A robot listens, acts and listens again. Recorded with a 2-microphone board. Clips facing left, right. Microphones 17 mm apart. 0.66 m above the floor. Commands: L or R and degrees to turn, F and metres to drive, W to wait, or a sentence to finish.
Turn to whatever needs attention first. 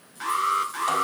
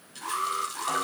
L90
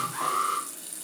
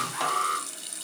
Facing the alarm, over 4 m away.